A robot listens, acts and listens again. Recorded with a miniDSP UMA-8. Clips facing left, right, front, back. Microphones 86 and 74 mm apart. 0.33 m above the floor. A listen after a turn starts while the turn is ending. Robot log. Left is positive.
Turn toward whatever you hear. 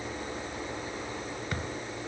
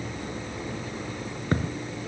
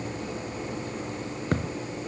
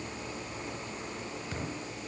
note: The thud: 35° right.
cmd yaw -35
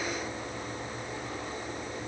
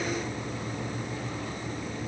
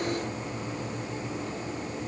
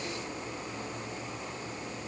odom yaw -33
end: I heard a thud from this way, but can't make it out now.